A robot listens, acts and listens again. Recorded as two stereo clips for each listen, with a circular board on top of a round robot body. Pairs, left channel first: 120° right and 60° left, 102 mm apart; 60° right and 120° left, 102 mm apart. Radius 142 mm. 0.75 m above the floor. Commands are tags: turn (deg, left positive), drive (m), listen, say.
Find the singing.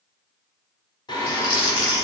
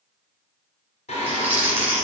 <turn deg="-65"/>
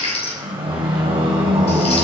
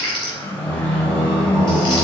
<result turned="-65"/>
<turn deg="25"/>
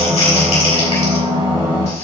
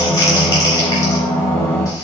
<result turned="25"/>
<turn deg="10"/>
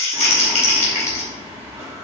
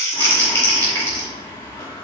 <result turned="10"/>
<say>Found it: singing, straight ahead.</say>